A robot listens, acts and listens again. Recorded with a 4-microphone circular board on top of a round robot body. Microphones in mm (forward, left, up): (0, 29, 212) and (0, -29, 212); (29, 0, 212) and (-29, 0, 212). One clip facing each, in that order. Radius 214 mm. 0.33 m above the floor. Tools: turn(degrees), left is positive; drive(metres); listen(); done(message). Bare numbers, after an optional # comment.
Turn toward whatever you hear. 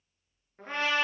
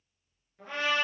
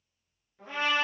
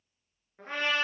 # The trumpet: 140° left.
turn(140)
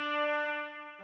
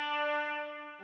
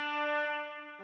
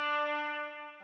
# The trumpet is now 10° left.
turn(10)
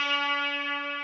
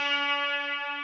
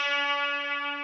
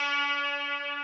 done("Facing the trumpet.")